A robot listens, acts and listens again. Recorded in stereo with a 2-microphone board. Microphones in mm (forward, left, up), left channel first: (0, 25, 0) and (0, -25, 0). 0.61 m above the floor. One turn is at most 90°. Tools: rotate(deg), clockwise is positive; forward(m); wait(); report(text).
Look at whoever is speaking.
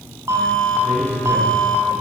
rotate(55)
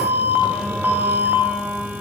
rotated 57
wait()
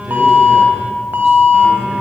wait()
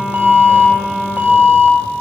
report("I heard a man speaking, but can't make it out now. It was about straight ahead or 65° right.")